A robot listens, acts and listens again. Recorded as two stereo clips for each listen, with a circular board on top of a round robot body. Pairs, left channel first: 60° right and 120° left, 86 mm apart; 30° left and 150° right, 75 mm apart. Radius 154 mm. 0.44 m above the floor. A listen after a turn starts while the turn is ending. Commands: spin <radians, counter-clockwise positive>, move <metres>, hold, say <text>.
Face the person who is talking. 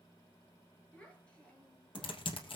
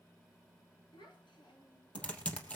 spin 0.26
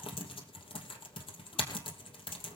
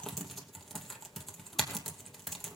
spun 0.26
hold
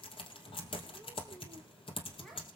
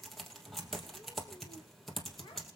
hold
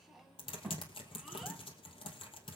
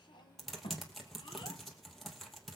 spin 0.52
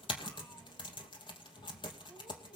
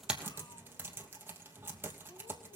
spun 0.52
hold
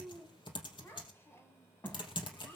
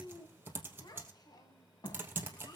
say Facing the child speaking, 2 to 4 m away.